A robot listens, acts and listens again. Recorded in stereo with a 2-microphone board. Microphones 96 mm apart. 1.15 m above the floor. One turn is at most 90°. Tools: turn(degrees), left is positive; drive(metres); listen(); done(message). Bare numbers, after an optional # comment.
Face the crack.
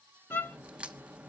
turn(-30)
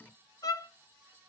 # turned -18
listen()
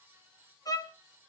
done("I heard a crack, but can't make it out now. It was about 5° left or 150° right.")